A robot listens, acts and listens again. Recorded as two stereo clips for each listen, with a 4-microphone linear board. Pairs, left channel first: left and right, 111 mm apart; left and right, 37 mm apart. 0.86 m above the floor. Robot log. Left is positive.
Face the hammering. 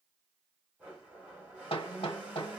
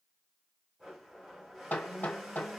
note: The hammering: about 55° left or 125° left.
cmd yaw +55
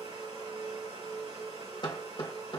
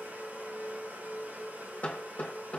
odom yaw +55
note: So it is at 55° left.
cmd yaw +55
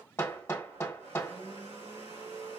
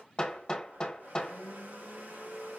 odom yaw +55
note: The hammering is now 30° left.
cmd yaw +30
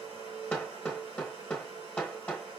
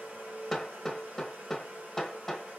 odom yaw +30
note: The hammering is now 10° left.
cmd yaw +10
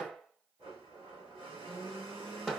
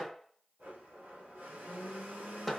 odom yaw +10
end: Found it: hammering, straight ahead.